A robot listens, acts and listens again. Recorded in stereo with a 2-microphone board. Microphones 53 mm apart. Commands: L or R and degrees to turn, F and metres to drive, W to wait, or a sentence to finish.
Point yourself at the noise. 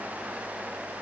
W
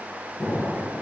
L50
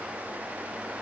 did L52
W
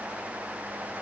I heard an explosion, but can't make it out now. It was about straight ahead or 75° left.